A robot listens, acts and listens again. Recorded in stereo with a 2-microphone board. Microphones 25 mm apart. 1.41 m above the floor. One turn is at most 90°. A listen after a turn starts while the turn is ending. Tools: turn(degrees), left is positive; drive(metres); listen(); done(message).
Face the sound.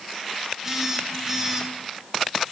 turn(degrees=-20)
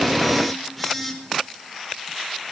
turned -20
done("Found it: a phone buzzing, straight ahead, over 4 m away.")